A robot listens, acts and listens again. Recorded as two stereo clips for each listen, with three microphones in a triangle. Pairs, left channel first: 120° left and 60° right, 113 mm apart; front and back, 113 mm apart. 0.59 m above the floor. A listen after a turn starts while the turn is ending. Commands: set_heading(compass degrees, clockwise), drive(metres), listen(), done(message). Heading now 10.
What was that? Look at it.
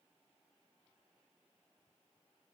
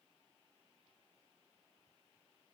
listen()
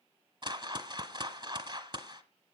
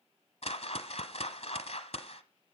set_heading(30)
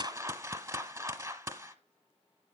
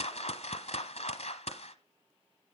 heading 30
done("Found it: a whoosh, straight ahead.")